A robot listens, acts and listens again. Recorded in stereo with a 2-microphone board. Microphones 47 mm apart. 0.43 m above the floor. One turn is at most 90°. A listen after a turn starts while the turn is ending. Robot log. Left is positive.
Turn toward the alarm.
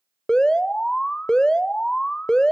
note: The alarm: about 15° left or 165° left.
cmd yaw +15
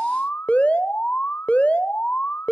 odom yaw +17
note: So it is at 150° left.
cmd yaw +90
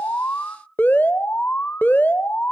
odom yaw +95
note: The alarm is now 50° left.
cmd yaw +50
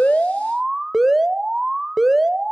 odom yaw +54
end: Found it: an alarm, straight ahead, under 1 m away.